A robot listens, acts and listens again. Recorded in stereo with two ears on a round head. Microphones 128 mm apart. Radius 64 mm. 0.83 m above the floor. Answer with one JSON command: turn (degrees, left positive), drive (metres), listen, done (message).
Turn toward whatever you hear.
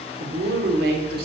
{"turn": -90}
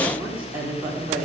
{"turn": -20}
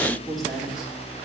{"done": "Found it: a woman speaking, straight ahead, 2 to 4 m away."}